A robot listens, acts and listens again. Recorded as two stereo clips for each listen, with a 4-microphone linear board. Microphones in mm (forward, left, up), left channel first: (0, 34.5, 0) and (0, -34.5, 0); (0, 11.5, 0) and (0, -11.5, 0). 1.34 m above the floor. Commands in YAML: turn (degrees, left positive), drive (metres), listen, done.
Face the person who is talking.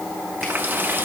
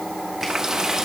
listen: true
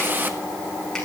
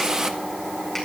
listen: true
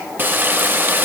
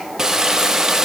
done: "I can't make out anyone speaking to turn to."